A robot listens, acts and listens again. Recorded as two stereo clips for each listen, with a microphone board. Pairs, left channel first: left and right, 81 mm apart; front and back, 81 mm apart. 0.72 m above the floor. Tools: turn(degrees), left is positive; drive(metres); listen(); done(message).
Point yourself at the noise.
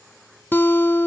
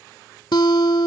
turn(degrees=30)
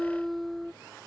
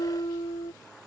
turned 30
done("Facing the guitar.")